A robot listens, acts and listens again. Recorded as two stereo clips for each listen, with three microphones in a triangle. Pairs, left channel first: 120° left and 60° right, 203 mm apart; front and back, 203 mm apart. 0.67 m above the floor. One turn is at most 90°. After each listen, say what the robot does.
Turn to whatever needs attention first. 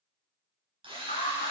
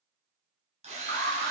Turn 90° left.
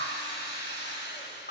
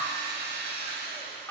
Turn 80° left.
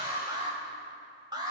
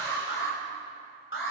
Turn 10° left.
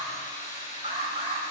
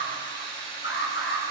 Found it: an alarm, straight ahead, 2 to 4 m away.